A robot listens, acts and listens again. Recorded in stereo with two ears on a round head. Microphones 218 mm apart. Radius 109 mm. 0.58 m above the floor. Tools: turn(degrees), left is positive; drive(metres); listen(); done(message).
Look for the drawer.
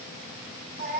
listen()
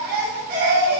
listen()
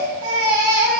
done("I can't make out a drawer, only a baby crying.")